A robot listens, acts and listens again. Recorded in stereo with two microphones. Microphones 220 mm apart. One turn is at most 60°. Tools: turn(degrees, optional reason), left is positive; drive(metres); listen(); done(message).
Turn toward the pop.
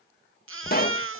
turn(degrees=45, reason="The pop: about 45° left or 135° left.")
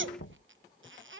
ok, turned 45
listen()
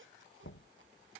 done("I heard a pop, but can't make it out now. It was about straight ahead or 90° left.")